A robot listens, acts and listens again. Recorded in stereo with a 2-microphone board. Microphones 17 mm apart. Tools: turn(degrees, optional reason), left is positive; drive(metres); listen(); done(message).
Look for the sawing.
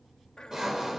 turn(degrees=-30, reason="The sawing: about 30° right or 150° right.")
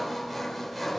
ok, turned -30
done("Found it: sawing, straight ahead.")